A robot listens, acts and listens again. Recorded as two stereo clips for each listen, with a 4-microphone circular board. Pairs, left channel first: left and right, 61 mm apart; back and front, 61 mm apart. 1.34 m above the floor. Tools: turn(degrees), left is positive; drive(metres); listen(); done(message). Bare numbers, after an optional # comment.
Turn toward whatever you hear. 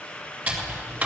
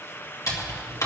# The typing on a keyboard: 160° right.
turn(-160)
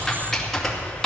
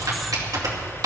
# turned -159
done("Facing the typing on a keyboard, 2 to 4 m away.")